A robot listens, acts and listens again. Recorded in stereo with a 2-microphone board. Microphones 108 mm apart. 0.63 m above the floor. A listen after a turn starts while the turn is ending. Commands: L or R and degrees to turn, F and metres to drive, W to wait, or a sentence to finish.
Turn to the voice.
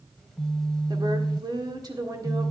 R35
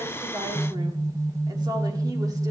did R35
R40
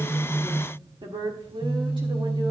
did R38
R130
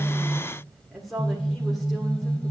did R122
Found it: a woman speaking, straight ahead.